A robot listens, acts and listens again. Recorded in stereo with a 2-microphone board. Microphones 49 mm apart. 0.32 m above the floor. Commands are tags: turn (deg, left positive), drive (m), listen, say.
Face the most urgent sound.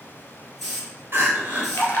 <turn deg="-50"/>
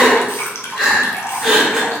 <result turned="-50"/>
<say>Facing the crying, 1 to 2 m away.</say>